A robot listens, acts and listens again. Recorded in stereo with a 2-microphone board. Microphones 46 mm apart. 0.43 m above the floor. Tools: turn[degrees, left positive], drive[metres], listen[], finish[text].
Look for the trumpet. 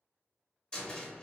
Action: listen[]
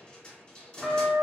Action: turn[-30]
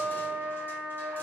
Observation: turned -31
Thought: So it is at 145° right.
Action: turn[-145]
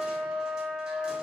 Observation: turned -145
Action: finish[Found it: a trumpet, straight ahead, 1 to 2 m away.]